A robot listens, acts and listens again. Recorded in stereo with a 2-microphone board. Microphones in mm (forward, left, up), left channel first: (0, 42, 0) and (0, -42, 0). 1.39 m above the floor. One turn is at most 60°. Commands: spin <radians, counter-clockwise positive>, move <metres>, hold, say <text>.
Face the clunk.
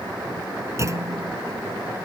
spin -0.61
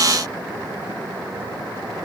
hold
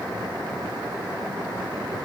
say I heard a clunk, but can't make it out now. It was about straight ahead or 110° right.